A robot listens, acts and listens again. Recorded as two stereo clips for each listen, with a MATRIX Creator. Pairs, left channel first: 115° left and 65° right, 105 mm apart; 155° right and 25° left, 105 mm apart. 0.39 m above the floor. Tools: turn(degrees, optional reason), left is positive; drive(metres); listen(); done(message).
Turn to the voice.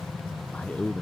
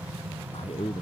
turn(degrees=-170, reason="The man speaking: 170° right.")
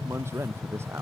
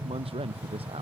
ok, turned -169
done("Facing the man speaking.")